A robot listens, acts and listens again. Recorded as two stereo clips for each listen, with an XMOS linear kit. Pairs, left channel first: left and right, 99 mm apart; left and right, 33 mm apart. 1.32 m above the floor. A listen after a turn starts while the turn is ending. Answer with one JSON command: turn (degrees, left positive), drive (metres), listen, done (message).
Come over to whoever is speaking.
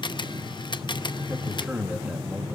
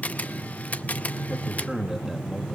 {"turn": -15}
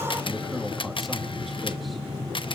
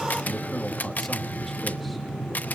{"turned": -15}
{"drive": 1.0}
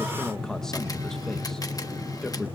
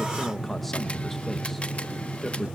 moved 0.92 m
{"drive": 1.0}
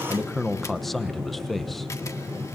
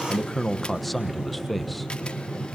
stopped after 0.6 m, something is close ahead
{"done": "Arrived at the man speaking, straight ahead."}